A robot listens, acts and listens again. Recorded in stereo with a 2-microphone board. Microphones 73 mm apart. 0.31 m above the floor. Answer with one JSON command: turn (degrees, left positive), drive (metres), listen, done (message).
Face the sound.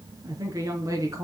{"turn": -50}
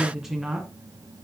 {"turn": -10}
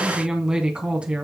{"turn": -15}
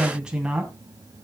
{"turn": -15}
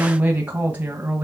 {"turn": -25}
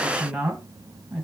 {"done": "Facing the woman speaking."}